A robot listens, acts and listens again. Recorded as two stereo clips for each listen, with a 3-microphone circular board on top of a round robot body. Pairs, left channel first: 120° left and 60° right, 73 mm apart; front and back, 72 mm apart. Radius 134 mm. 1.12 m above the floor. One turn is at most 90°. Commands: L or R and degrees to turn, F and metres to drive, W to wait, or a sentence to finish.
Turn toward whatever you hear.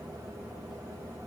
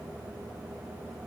W
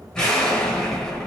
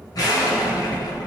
L40
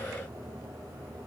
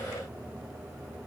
Facing where the explosion came from. I can't hear it now.